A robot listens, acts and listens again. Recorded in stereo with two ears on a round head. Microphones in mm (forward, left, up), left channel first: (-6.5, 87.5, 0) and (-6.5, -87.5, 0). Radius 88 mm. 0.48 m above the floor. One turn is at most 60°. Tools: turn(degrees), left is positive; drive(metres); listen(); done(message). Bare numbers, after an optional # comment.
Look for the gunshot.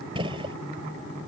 # The gunshot: about 25° right or 155° right.
turn(-25)
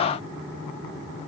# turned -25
listen()
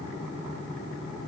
done("I heard a gunshot, but can't make it out now. It was about straight ahead or 130° right.")